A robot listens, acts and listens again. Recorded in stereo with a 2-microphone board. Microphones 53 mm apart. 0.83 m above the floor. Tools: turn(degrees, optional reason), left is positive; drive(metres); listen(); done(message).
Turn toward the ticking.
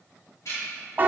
turn(degrees=70, reason="The ticking: about 70° left or 110° left.")
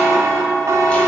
listen()
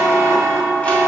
listen()
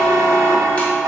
done("I heard ticking, but can't make it out now. It was about straight ahead or 40° left.")